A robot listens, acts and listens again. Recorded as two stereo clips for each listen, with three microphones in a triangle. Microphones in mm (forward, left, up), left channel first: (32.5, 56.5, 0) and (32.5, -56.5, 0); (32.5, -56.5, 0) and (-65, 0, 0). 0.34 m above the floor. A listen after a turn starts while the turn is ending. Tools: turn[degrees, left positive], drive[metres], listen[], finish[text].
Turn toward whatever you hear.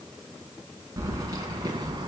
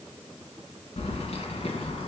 Thought: The keys jangling: 45° right.
Action: turn[-45]
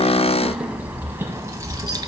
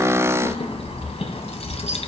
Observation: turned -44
Thought: The keys jangling is now 40° right.
Action: turn[-40]
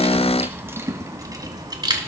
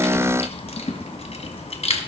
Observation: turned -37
Thought: The keys jangling is now 45° right.
Action: turn[-45]
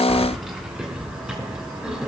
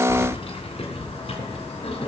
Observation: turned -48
Thought: The keys jangling is now 10° right.
Action: turn[-10]
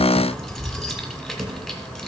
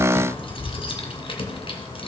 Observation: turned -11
Action: finish[Found it: keys jangling, straight ahead, 2 to 4 m away.]